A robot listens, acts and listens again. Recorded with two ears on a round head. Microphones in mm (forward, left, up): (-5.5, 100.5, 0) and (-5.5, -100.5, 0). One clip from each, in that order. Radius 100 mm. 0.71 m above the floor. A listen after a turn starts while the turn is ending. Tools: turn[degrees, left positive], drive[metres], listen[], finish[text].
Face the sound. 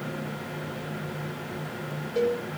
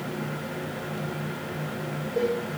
Action: turn[90]
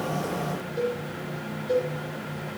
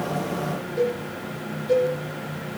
Action: finish[Facing the cowbell, over 4 m away.]